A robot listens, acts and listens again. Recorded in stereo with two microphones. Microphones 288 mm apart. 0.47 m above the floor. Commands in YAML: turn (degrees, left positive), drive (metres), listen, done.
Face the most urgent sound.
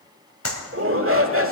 turn: -50
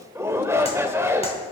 turn: -10
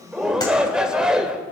done: "Facing the shout."